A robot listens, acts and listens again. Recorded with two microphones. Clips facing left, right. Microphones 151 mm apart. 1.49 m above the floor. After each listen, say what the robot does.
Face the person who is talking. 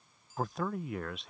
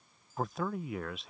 Turn 30° left.
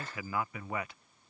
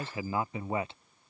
Turn 30° right.
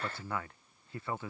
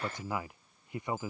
Turn 20° right.
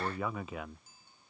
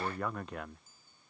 Facing the man speaking.